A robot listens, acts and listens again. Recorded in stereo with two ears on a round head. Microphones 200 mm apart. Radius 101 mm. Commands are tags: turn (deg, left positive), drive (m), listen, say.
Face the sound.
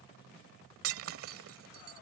<turn deg="-70"/>
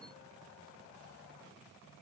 <listen/>
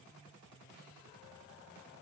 <say>I heard breaking glass, but can't make it out now. It was about straight ahead or 40° right.</say>